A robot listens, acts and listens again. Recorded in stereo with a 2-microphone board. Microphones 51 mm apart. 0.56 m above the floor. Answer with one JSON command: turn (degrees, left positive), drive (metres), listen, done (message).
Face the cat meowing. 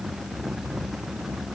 {"listen": true}
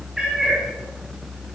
{"turn": -30}
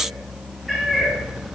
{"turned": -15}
{"turn": -30}
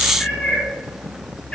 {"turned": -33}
{"turn": 20}
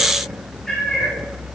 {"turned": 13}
{"turn": 10}
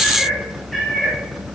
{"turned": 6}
{"done": "Facing the cat meowing, over 4 m away."}